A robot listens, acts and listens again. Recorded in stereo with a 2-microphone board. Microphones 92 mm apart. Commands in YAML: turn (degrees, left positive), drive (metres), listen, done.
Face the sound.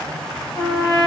turn: 60
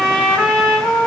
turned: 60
done: "Found it: a trumpet, straight ahead, under 1 m away."